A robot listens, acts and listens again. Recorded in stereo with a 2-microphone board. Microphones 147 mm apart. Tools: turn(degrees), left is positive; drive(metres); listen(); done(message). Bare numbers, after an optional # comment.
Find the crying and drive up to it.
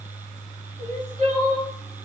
# The crying: about 55° right or 125° right.
turn(-55)
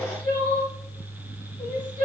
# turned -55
# So it is at 70° right.
turn(-70)
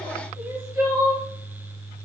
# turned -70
# The crying is now 20° right.
turn(-20)
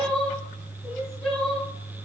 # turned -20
drive(1.0)
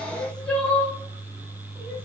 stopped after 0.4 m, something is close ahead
# The crying is now 10° left.
turn(10)
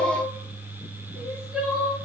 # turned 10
done("Blocked. The crying is further on, straight ahead.")